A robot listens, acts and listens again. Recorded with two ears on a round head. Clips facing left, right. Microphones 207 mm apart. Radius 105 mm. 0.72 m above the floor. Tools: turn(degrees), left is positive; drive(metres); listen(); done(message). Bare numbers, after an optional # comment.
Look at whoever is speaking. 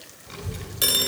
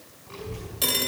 # The child speaking: about 50° left or 130° left.
turn(50)
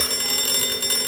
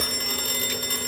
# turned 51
done("Facing the child speaking, over 4 m away.")